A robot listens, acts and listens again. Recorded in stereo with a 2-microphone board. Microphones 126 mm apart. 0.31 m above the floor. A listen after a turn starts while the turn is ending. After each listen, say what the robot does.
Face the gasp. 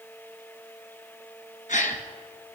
Turn 90° left.
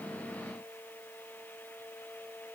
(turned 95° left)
I heard a gasp from this way, but can't make it out now.